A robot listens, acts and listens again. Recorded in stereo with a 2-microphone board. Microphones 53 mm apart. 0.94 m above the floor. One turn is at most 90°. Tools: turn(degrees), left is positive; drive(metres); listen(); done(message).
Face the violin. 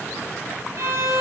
turn(degrees=-60)
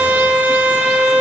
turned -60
turn(degrees=-30)
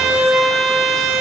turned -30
turn(degrees=-10)
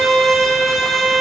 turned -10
done("Facing the violin, 1 to 2 m away.")